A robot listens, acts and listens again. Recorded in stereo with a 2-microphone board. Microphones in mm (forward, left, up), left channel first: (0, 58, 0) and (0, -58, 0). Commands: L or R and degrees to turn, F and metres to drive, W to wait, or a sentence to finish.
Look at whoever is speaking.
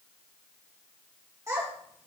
R25
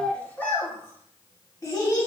L35
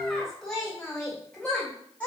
L15
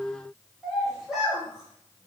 Found it: a child speaking, straight ahead, 2 to 4 m away.